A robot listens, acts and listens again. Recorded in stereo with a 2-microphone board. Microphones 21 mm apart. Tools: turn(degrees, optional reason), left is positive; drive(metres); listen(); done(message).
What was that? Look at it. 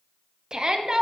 turn(degrees=-40, reason="The shout: about 40° right or 140° right.")
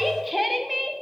done("Found it: a shout, straight ahead.")